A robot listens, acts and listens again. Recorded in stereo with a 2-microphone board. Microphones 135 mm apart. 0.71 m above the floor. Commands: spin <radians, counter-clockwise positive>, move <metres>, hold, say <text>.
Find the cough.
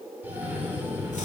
spin -0.52
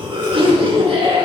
spin -2.36
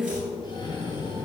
spin 0.70
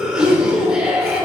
say Facing the cough.